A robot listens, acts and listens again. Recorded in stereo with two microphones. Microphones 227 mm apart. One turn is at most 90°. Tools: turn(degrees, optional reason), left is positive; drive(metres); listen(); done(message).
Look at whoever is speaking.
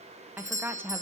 turn(degrees=-30)
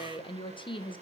turn(degrees=20, reason="So it is at 20° left.")
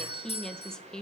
done("Found it: a woman speaking, straight ahead, 1 to 2 m away.")